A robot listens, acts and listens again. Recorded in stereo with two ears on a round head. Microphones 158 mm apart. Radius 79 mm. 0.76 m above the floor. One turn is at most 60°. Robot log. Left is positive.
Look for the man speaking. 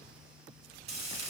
cmd idle
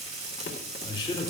note: The man speaking: about 30° left or 150° left.
cmd yaw +30
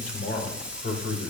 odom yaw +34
note: So it is at 120° left.
cmd yaw +60
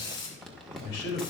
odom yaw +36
note: The man speaking is now 70° left.
cmd yaw +60
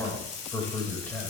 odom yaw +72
note: The man speaking is now 10° left.
cmd yaw +10
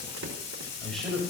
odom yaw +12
end: Found it: a man speaking, straight ahead.